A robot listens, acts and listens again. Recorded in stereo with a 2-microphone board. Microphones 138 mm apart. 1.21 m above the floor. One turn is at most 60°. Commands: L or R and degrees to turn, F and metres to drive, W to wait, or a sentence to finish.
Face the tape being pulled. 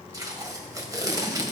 R30
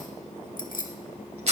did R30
R60
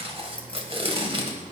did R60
R45
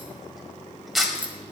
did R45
Found it: tape being pulled, straight ahead.